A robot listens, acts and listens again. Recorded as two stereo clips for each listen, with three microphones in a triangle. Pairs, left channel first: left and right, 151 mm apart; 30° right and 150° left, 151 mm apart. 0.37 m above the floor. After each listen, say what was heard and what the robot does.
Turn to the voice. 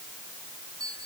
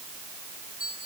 Keep listening.
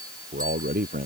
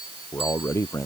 The man speaking: 100° right. Turn 100° right.
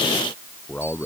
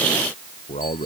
The man speaking is now 10° left. Turn 10° left.
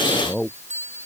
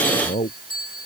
Facing the man speaking.